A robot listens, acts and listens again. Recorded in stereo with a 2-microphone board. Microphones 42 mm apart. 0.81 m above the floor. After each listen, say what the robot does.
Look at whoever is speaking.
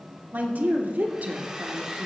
Turn 40° right.
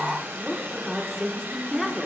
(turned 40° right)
Facing the woman speaking.